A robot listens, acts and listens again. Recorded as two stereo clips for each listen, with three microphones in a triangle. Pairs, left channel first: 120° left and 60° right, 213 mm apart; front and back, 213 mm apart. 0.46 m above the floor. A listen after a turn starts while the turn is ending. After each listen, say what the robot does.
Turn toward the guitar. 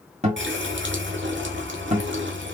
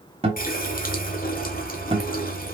Turn 120° right.
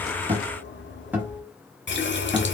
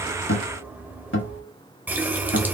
Turn 20° left.
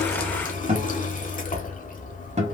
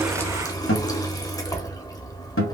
Found it: a guitar, straight ahead, 1 to 2 m away.